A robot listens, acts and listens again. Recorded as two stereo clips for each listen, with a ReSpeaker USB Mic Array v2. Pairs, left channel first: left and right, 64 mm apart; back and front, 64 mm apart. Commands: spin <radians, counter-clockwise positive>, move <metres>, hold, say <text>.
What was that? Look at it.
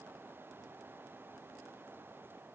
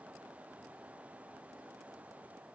hold
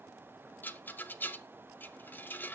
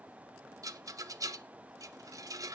spin 0.52
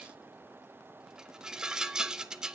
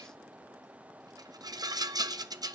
spin -0.17
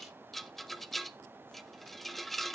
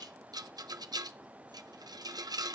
say Facing the rattle, under 1 m away.